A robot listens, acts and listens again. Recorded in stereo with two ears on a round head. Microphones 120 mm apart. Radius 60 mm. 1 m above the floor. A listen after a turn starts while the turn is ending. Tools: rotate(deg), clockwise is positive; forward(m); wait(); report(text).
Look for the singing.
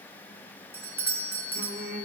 rotate(75)
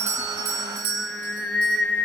report("Facing the singing, 1 to 2 m away.")